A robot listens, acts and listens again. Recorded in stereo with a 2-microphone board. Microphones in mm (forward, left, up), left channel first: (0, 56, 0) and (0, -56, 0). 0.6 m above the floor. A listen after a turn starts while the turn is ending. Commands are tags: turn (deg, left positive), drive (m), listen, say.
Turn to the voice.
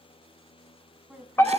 <turn deg="-30"/>
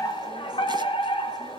<listen/>
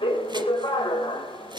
<listen/>
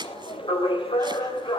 <say>I heard a woman speaking, but can't make it out now. It was about 20° left or 140° right.</say>